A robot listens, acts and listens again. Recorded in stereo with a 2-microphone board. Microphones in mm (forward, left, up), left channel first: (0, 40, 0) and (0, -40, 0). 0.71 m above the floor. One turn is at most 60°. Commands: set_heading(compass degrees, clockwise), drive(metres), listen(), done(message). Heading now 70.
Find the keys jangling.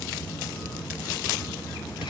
listen()
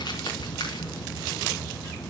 listen()
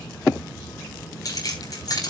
set_heading(20)
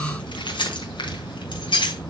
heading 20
set_heading(320)
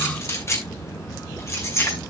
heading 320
set_heading(285)
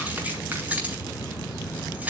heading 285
set_heading(300)
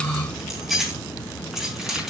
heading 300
done("Found it: keys jangling, straight ahead, over 4 m away.")